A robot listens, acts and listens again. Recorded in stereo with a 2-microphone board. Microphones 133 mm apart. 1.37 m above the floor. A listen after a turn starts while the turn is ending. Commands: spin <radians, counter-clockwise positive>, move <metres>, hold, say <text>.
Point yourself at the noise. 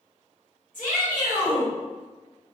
spin 1.57
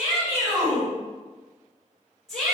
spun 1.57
say Found it: a shout, straight ahead.